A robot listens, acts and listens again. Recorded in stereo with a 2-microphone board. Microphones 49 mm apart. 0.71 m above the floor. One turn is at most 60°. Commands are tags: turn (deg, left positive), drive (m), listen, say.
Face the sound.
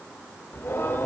<turn deg="50"/>
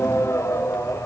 <turn deg="60"/>
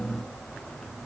<turn deg="10"/>
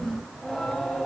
<say>Found it: singing, straight ahead, 2 to 4 m away.</say>